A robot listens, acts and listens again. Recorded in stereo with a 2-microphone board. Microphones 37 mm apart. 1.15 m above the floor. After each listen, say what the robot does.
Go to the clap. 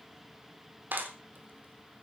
Turn 65° right.
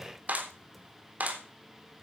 Turn 50° right.
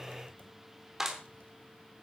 Turn 15° right.
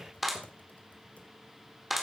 Drive 1.0 m forward.
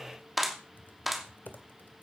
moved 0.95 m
Drive 1.0 m forward.
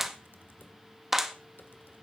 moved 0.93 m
Turn 10° right.
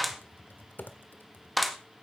Drive 1.0 m forward.
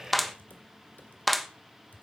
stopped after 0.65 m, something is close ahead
I am next to the clap.